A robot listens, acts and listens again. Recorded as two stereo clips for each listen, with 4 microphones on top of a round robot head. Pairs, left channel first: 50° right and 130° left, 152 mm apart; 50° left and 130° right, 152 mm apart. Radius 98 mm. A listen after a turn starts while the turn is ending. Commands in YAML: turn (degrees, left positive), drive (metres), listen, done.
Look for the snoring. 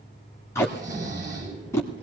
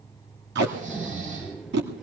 turn: -165
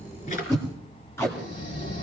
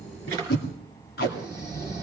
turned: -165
turn: -15
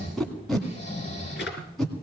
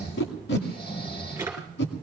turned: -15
done: "Facing the snoring, over 4 m away."